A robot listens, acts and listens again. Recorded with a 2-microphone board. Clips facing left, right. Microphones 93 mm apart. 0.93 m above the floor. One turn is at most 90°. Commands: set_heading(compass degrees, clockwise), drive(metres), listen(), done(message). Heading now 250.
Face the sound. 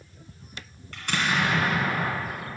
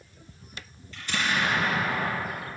set_heading(180)
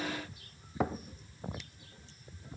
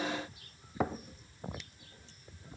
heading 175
listen()
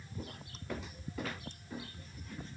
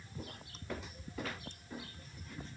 done("I heard an explosion, but can't make it out now. It was about 5° right or 35° left.")